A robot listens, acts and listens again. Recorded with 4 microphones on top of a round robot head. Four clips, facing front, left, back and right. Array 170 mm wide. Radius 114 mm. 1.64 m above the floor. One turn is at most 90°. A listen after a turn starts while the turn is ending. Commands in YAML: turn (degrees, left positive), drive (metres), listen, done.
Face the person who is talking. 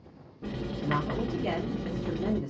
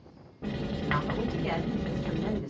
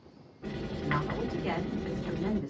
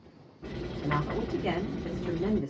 turn: -60
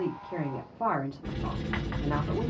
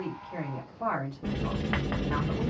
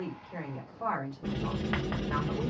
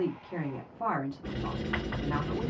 turn: -10
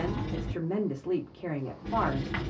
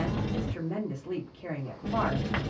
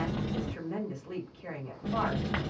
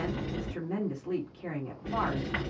done: "Facing the woman speaking, 1 to 2 m away."